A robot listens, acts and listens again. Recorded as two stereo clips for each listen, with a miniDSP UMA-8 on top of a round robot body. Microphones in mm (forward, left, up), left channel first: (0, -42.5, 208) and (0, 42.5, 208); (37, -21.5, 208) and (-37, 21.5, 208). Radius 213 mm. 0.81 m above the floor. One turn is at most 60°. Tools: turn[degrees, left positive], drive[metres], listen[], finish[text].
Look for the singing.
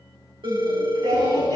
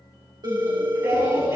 Thought: The singing: 95° left.
Action: turn[60]
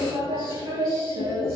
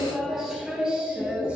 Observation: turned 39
Thought: The singing is now 75° left.
Action: turn[60]
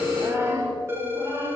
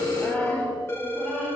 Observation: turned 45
Thought: The singing is now 55° left.
Action: turn[55]
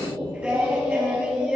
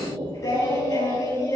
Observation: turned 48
Thought: The singing is now 15° left.
Action: turn[15]
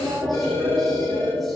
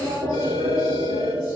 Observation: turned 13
Action: finish[Facing the singing.]